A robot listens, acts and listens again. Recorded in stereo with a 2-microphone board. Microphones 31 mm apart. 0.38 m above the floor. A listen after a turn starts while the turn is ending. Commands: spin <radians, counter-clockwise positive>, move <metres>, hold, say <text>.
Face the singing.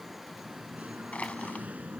spin -1.05
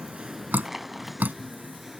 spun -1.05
say Found it: singing, straight ahead.